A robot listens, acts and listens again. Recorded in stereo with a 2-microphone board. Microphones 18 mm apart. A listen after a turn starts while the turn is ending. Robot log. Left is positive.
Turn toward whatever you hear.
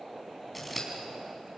cmd yaw +30
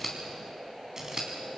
note: So it is at 20° right.
cmd yaw -20
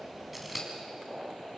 end: Found it: scissors, straight ahead.